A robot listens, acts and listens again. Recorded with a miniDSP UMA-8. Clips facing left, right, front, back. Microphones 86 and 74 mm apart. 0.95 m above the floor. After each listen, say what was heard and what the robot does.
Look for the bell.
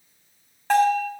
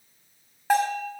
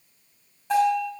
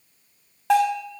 The bell: 170° right. Turn 170° right.
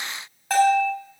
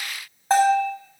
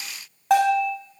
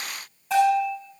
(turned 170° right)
The bell is now 25° right. Turn 25° right.
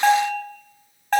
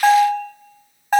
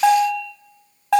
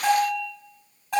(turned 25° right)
The bell is now 10° right. Turn 10° right.
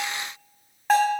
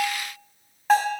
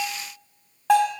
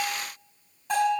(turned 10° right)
Facing the bell.